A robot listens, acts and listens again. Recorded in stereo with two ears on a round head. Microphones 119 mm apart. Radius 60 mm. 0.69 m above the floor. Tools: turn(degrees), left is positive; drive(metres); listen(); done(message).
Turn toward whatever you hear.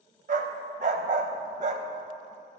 turn(degrees=-60)
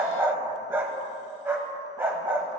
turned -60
turn(degrees=-20)
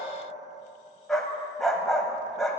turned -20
done("Found it: a dog barking, straight ahead.")